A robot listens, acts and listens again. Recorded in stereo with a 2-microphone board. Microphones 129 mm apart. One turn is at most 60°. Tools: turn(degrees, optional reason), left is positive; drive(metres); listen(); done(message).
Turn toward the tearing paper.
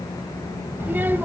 listen()
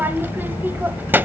listen()
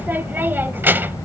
done("I can't make out tearing paper to turn to.")